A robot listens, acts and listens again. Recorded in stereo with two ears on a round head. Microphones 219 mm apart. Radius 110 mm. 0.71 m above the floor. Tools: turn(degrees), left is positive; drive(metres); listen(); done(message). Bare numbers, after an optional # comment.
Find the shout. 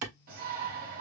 # The shout: about 40° right or 140° right.
turn(-40)
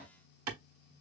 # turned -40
done("Found it: a shout, straight ahead, 1 to 2 m away.")